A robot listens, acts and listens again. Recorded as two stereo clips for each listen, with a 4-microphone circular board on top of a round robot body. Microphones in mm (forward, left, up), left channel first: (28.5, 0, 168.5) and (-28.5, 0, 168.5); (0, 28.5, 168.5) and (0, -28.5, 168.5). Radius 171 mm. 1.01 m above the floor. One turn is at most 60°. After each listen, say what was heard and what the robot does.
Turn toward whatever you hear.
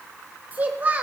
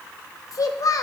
The child speaking: 115° left. Turn 60° left.
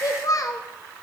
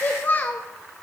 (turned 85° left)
The child speaking is now 30° left. Turn 30° left.
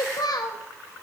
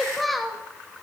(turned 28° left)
Facing the child speaking.